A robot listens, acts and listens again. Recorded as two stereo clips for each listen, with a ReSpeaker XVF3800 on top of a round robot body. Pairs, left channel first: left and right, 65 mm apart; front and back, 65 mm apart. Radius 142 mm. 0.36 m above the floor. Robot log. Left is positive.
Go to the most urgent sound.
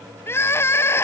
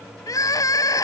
note: The crying: 40° left.
cmd yaw +40
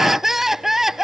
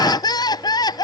cmd fwd 1.0
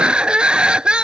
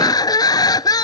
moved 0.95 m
note: The crying is now 15° right.
cmd yaw -15
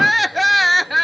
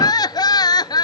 cmd fwd 1.0
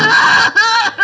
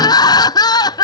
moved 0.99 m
cmd fwd 1.0
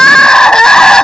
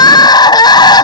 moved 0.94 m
note: The crying is now 10° left.
cmd yaw +10
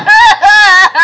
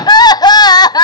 cmd fwd 1.0
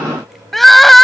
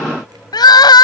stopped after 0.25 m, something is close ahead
end: Arrived at the crying, straight ahead.